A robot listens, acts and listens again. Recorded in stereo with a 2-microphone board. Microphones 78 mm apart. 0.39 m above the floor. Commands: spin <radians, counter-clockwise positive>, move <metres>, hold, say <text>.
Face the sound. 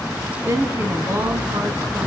spin -0.70
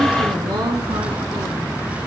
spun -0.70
spin -1.83
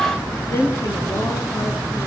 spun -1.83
spin 0.52
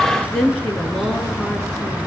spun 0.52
say Found it: a woman speaking, straight ahead.